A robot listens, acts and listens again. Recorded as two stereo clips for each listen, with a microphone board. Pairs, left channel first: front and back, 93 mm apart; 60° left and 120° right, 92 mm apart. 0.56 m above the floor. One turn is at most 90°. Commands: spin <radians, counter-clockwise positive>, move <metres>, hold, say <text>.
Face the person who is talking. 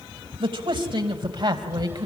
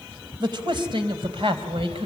spin -1.57
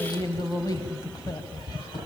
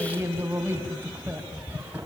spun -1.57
spin -0.87
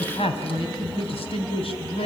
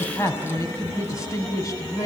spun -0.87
say Found it: a man speaking, straight ahead, over 4 m away.